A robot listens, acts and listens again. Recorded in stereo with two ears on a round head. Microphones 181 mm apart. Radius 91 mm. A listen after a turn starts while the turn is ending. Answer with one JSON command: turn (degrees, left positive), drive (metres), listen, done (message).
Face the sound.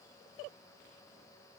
{"listen": true}
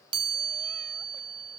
{"turn": -25}
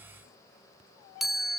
{"done": "Facing the chime."}